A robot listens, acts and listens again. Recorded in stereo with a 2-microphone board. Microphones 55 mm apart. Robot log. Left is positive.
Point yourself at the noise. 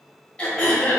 note: The throat clearing: about 20° left or 160° left.
cmd yaw +20
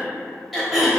end: Found it: throat clearing, straight ahead.